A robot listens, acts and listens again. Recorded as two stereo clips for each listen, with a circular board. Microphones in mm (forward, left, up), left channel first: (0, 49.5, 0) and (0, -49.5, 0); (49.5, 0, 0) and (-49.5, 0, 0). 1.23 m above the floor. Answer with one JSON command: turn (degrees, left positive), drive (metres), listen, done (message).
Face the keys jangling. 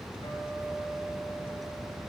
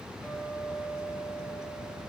{"listen": true}
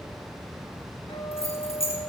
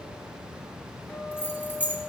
{"turn": 75}
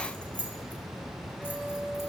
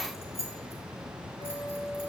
{"turn": 15}
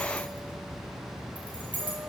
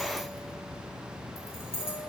{"turn": 15}
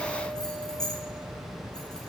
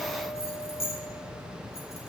{"done": "Found it: keys jangling, straight ahead."}